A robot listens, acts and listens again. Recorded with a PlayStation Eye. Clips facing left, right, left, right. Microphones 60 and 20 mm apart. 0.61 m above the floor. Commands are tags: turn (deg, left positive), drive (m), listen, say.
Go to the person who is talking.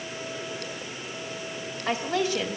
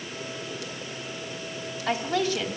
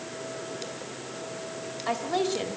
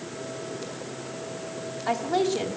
<turn deg="25"/>
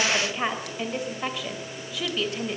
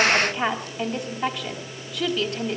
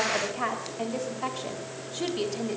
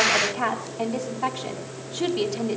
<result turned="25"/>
<drive m="1.0"/>
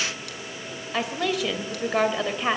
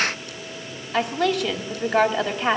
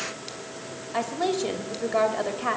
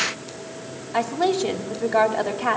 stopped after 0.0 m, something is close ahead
<say>Blocked. The woman speaking is further on, straight ahead.</say>